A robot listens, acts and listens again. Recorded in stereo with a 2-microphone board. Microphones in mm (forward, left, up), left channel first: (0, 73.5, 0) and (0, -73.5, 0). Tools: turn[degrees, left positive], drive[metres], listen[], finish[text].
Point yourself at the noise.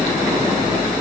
Action: listen[]
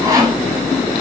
Thought: The sawing: about 25° right or 155° right.
Action: turn[-25]
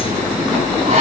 Action: listen[]
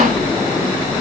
Action: listen[]
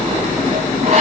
Thought: So it is at 130° right.
Action: turn[-130]
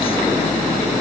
Action: listen[]
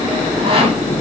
Thought: The sawing is now 40° right.
Action: turn[-40]
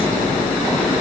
Action: listen[]
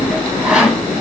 Action: finish[Found it: sawing, straight ahead.]